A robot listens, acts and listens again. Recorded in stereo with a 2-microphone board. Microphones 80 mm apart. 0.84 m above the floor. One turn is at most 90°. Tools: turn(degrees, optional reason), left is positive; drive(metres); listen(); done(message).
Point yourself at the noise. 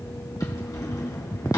turn(degrees=50, reason="The drawer: about 50° left or 130° left.")
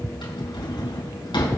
turn(degrees=85, reason="So it is at 85° left.")
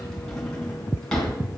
turn(degrees=10, reason="The drawer is now 10° left.")
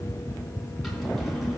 done("Found it: a drawer, straight ahead, 2 to 4 m away.")